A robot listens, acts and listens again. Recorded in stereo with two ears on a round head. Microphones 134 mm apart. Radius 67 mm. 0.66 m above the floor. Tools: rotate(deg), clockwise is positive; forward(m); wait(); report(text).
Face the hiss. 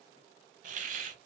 rotate(55)
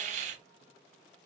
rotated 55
rotate(60)
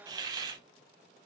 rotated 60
rotate(30)
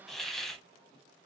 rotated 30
report("Facing the hiss, under 1 m away.")